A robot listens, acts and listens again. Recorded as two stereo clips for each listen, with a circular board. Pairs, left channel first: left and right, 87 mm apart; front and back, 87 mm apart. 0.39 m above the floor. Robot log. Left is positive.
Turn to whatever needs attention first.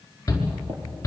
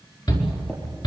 note: The shout: 35° left.
cmd yaw +35
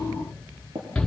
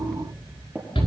note: The shout is now 10° left.
cmd yaw +10
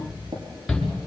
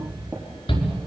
end: Found it: a shout, straight ahead.